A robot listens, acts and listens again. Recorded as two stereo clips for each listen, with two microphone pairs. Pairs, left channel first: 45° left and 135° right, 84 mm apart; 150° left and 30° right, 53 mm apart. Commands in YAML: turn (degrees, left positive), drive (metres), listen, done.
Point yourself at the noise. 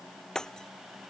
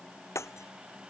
turn: 130
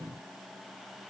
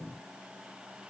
done: "Facing where the breaking glass came from. I can't hear it now."